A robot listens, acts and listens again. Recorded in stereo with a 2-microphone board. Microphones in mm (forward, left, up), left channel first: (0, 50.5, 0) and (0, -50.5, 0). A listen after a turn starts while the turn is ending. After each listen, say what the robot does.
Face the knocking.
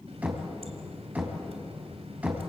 Turn 30° right.
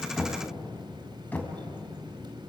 Turn 15° left.
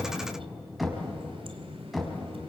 Facing the knocking.